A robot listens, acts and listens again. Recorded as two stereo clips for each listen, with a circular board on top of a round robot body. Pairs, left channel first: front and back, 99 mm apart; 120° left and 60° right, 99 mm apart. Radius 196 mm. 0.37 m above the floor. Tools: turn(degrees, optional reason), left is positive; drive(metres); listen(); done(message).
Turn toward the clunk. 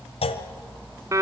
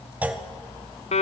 turn(degrees=15, reason="The clunk: 15° left.")
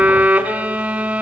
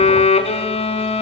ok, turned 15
done("Facing where the clunk came from. I can't hear it now.")